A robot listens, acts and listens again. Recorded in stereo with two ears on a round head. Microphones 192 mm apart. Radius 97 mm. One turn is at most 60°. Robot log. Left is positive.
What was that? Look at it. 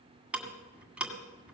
cmd yaw -30
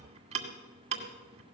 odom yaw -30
note: So it is at 140° right.
cmd yaw -60
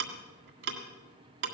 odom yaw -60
note: The ticking is now 80° right.
cmd yaw -60
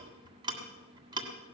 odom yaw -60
note: The ticking is now 25° right.
cmd yaw -25
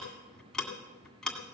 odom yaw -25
end: Facing the ticking.